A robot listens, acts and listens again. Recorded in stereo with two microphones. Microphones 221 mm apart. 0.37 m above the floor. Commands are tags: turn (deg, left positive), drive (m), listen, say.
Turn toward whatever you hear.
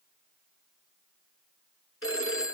<turn deg="75"/>
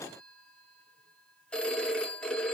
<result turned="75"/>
<say>Found it: a phone ringing, straight ahead.</say>